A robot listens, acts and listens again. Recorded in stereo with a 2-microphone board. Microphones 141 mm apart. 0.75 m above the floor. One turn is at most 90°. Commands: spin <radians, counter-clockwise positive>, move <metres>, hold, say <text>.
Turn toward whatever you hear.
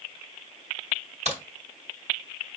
spin -0.96
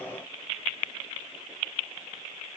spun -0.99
hold
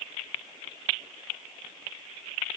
say I heard a crack, but can't make it out now. It was about 5° left or 70° right.